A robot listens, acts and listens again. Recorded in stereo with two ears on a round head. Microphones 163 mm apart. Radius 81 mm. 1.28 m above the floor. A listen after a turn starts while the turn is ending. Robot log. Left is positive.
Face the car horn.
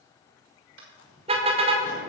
note: The car horn: about 35° right or 145° right.
cmd yaw -35
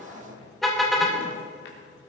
end: Facing the car horn, 2 to 4 m away.